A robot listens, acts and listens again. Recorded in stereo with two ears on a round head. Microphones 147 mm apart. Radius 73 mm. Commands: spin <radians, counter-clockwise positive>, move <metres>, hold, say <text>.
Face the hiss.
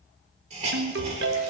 spin -0.79
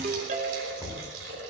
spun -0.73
spin -1.66
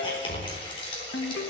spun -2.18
spin 0.61
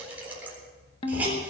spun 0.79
spin -0.17
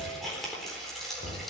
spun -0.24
say Found it: a hiss, straight ahead.